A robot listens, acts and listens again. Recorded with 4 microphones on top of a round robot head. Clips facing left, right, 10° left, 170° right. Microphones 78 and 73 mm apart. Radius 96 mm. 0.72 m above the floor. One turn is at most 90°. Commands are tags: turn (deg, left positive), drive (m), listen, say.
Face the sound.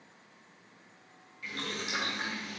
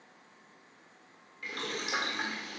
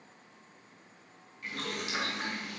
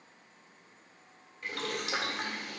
<turn deg="-90"/>
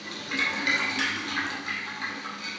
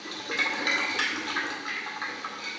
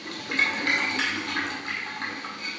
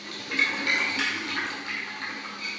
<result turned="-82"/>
<turn deg="-50"/>
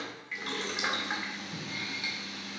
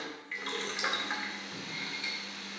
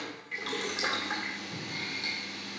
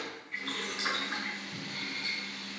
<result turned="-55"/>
<say>Facing the boiling.</say>